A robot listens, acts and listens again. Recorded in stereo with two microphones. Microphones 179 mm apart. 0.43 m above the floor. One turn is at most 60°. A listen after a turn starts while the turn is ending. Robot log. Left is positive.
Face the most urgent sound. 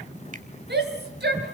note: The shout: about 65° right or 115° right.
cmd yaw -60
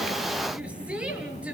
end: Found it: a shout, straight ahead.